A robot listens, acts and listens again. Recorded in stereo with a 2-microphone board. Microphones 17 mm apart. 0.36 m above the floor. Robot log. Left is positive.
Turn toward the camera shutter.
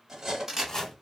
note: The camera shutter: about 40° right or 140° right.
cmd yaw -40
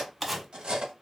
end: Found it: a camera shutter, straight ahead.